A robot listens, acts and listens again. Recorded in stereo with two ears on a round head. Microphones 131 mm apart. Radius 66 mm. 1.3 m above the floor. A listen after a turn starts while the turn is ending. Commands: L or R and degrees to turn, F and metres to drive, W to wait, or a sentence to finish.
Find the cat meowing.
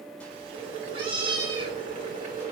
R35
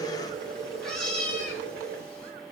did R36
Found it: a cat meowing, straight ahead, 2 to 4 m away.